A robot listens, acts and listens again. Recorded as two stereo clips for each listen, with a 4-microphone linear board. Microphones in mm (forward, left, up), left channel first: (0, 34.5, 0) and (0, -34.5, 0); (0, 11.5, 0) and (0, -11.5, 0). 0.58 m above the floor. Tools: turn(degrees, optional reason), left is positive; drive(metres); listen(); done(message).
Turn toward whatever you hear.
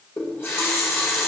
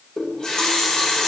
turn(degrees=35, reason="The running tap: about 35° left or 145° left.")
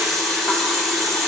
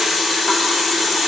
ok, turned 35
done("Found it: a running tap, straight ahead, under 1 m away.")